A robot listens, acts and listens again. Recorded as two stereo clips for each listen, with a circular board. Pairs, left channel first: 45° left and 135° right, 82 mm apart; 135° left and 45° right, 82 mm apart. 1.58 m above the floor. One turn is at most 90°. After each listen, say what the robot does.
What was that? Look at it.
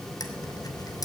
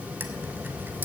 Turn 15° left.
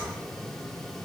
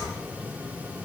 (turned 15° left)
I heard a dropped coin from this way, but can't make it out now.